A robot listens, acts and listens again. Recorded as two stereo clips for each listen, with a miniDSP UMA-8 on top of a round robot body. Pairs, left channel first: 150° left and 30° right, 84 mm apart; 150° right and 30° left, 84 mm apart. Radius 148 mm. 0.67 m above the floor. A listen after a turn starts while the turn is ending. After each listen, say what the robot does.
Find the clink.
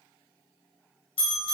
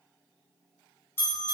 Keep listening.
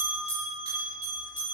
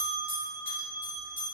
Keep listening.
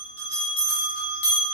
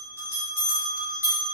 I can't make out a clink, only a bell.